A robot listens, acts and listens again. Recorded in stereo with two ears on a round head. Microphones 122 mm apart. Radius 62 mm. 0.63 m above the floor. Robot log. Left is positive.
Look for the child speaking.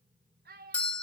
cmd yaw -90
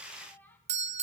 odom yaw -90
note: So it is at 15° left.
cmd yaw +15
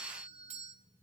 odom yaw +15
cmd idle
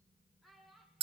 end: Found it: a child speaking, straight ahead, over 4 m away.